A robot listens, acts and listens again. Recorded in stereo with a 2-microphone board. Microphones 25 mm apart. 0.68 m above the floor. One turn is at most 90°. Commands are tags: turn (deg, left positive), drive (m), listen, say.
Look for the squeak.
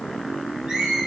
<turn deg="-25"/>
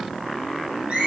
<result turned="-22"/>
<turn deg="-90"/>
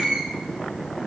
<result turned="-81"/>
<turn deg="-50"/>
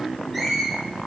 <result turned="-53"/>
<say>Facing the squeak, over 4 m away.</say>